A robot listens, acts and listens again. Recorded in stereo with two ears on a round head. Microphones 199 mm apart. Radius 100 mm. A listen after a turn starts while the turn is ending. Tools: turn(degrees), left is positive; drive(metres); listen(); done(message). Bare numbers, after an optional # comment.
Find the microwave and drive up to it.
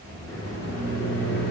# The microwave: about 55° left or 125° left.
turn(55)
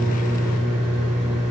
drive(1.0)
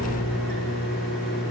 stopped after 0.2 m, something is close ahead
done("Blocked. The microwave is further on, straight ahead.")